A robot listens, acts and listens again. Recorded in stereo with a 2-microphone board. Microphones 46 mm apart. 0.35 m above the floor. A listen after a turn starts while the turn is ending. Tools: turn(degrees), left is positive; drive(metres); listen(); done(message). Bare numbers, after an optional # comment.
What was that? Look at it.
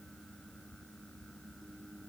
listen()
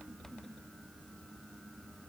listen()
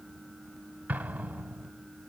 # The explosion: about 35° right or 145° right.
turn(-35)
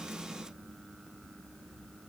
listen()
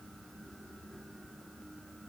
done("I heard an explosion, but can't make it out now. It was about straight ahead or 110° right.")